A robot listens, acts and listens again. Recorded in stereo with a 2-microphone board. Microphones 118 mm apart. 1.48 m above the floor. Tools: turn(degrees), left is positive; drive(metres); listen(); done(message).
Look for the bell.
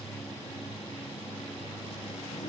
listen()
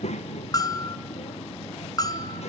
turn(degrees=35)
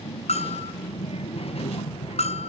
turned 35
turn(degrees=110)
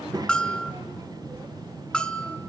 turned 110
turn(degrees=10)
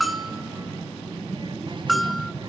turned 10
done("Facing the bell, under 1 m away.")